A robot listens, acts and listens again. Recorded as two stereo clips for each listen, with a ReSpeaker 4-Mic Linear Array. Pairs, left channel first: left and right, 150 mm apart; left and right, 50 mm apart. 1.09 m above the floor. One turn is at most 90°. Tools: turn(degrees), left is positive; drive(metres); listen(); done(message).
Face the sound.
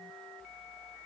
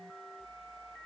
listen()
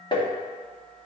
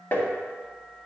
turn(degrees=30)
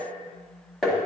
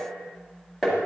done("Found it: tapping, straight ahead, 1 to 2 m away.")